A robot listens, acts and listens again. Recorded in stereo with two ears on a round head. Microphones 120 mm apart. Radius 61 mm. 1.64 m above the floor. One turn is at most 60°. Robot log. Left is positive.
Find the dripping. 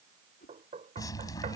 note: The dripping: about 30° left or 150° left.
cmd yaw +30
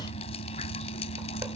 note: So it is at 115° left.
cmd yaw +60
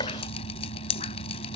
note: The dripping is now 55° left.
cmd yaw +55
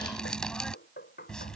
end: Found it: dripping, straight ahead.